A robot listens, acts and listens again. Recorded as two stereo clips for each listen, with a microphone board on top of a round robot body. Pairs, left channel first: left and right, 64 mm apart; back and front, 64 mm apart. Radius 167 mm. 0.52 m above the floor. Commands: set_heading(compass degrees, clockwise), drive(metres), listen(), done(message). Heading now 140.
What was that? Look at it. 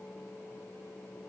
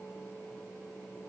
listen()
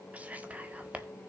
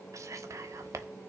set_heading(165)
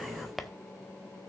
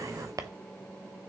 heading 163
done("Found it: whispering, straight ahead, 1 to 2 m away.")